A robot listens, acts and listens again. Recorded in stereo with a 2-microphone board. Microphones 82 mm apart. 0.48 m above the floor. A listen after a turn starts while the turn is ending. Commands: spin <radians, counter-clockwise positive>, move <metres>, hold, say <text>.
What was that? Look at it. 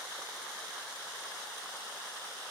hold
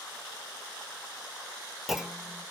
spin -0.52
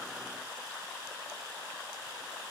hold
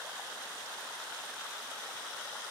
say I heard a clunk, but can't make it out now. It was about 25° left or 145° right.